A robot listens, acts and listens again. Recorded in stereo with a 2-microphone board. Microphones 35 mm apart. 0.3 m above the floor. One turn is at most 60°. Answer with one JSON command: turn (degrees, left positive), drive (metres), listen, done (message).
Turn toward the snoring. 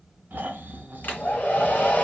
{"turn": -60}
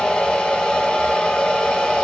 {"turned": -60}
{"turn": -30}
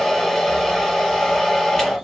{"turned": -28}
{"listen": true}
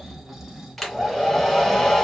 {"turn": -15}
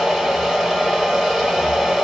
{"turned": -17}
{"listen": true}
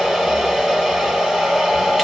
{"listen": true}
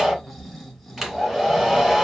{"done": "Found it: snoring, straight ahead, under 1 m away."}